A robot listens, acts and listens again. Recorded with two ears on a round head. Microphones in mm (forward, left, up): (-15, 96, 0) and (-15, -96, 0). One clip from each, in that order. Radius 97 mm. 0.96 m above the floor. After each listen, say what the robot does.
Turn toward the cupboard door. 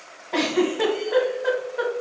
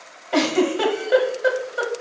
Keep listening.
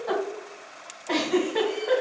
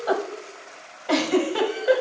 Keep listening.
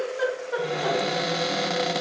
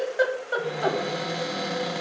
Turn 45° left.
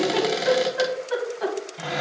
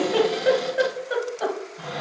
Turn 80° left.
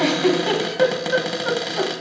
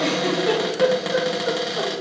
Facing the cupboard door, under 1 m away.